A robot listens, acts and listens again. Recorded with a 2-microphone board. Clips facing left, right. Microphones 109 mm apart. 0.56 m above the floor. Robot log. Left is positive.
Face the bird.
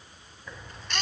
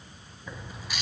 cmd yaw -30
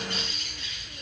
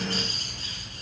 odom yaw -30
note: So it is at 140° right.
cmd yaw -140
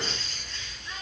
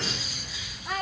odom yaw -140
end: Found it: a bird, straight ahead, 2 to 4 m away.